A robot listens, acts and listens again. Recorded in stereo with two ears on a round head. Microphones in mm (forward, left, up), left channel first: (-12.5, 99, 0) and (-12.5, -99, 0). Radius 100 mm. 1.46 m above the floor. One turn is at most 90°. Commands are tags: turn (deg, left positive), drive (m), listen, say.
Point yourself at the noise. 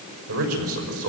<turn deg="-70"/>
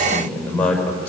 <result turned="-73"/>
<say>Found it: a man speaking, straight ahead, over 4 m away.</say>